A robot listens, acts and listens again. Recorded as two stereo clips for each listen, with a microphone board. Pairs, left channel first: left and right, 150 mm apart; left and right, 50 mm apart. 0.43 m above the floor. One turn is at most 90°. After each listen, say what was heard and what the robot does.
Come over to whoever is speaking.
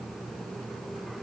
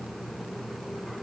Keep listening.
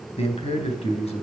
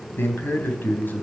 The man speaking: about 45° left or 135° left. Turn 45° left.
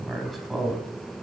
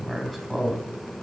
Drive 1.0 m forward.
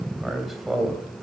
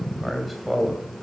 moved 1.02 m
Drive 1.0 m forward.
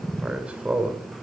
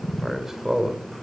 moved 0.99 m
The man speaking is now 10° right. Turn 10° right.
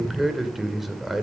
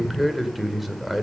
Drive 1.0 m forward.
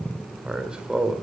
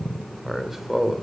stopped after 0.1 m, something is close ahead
The man speaking is now 10° right. Turn 10° right.
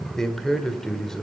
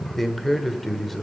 I am next to the man speaking.